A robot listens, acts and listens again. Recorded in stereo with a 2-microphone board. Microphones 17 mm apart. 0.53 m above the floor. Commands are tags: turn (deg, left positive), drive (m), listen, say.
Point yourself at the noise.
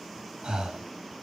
<turn deg="-90"/>
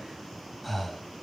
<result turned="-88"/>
<turn deg="10"/>
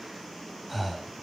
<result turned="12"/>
<say>Facing the breathing, 1 to 2 m away.</say>